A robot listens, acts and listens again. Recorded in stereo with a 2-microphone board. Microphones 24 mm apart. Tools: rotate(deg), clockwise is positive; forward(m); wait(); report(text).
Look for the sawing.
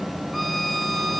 wait()
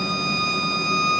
wait()
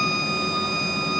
report("I can't make out sawing, only a violin.")